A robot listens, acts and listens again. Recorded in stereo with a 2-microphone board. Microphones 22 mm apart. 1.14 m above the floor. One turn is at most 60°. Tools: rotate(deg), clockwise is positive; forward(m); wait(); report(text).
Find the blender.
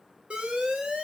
wait()
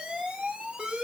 wait()
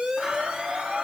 rotate(60)
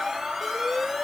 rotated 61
rotate(40)
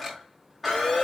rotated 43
report("Found it: a blender, straight ahead, 2 to 4 m away.")